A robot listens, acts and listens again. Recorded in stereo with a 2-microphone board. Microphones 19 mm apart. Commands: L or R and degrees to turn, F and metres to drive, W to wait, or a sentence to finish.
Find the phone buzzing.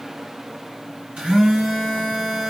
R70
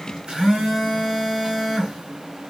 R45
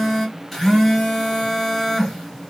L15
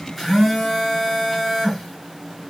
Found it: a phone buzzing, straight ahead.